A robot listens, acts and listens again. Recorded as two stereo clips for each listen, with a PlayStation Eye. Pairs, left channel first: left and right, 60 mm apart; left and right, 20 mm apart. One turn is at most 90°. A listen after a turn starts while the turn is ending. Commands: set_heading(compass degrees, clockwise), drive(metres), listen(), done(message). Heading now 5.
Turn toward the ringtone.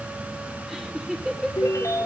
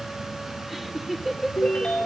set_heading(310)
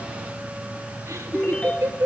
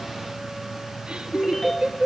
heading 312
set_heading(287)
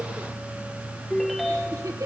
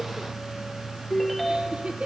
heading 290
done("Facing the ringtone.")